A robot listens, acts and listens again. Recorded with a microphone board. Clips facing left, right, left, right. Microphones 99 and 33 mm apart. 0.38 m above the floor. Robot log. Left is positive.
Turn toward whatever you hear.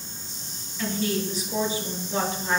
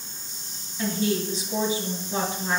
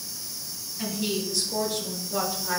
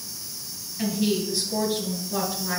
note: The woman speaking: about 15° right or 165° right.
cmd yaw -15
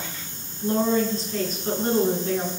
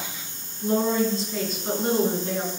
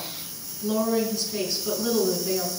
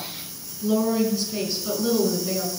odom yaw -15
cmd yaw +30
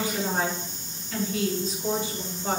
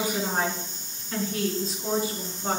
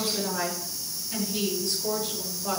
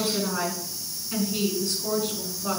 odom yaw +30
note: So it is at 25° right.
cmd yaw -25
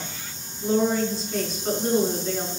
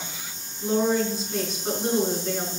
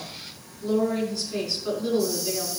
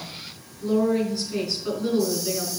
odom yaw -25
end: Facing the woman speaking.